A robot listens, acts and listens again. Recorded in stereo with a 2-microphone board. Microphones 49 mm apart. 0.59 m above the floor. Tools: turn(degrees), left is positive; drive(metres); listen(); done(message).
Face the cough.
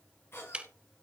turn(degrees=60)
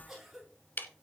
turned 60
done("Found it: a cough, straight ahead, over 4 m away.")